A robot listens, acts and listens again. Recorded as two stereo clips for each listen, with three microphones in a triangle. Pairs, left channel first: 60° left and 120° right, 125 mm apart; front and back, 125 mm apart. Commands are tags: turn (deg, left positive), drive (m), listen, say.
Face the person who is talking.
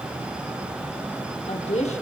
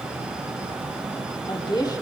<turn deg="55"/>
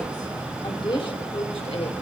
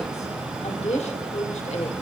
<turn deg="25"/>
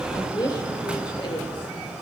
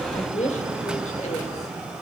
<turn deg="15"/>
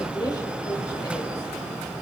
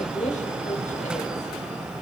<say>Facing the woman speaking.</say>